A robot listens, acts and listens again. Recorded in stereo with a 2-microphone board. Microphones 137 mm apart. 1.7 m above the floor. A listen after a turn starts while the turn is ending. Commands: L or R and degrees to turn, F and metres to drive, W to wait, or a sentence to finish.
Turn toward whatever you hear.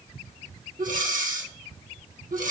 R75
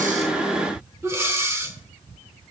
R20
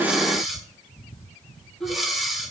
Facing the breathing.